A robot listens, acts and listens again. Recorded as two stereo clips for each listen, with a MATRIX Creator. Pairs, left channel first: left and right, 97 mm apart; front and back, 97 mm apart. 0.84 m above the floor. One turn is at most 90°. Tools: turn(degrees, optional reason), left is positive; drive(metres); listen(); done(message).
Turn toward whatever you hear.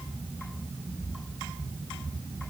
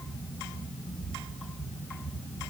listen()
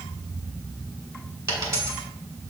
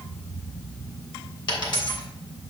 turn(degrees=-35, reason="The dropped coin: 35° right.")
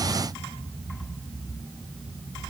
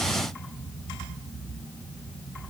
done("Facing where the dropped coin came from. I can't hear it now.")